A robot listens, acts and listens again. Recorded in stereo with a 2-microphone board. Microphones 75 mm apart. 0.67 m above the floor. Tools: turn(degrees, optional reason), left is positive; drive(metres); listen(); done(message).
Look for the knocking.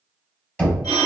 turn(degrees=30)
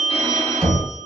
turn(degrees=-15, reason="So it is at 15° right.")
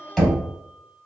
done("Facing the knocking.")